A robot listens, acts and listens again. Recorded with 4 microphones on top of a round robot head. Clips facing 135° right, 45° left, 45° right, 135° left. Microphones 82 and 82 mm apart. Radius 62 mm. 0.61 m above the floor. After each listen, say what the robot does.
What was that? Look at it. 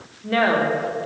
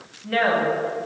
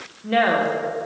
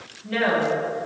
Turn 75° right.
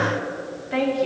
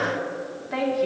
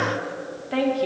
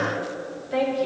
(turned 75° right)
Turn 40° right.
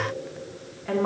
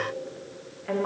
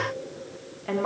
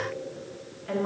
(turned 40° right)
Turn 55° right.
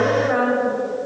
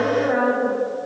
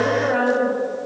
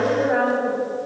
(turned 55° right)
Facing the woman speaking.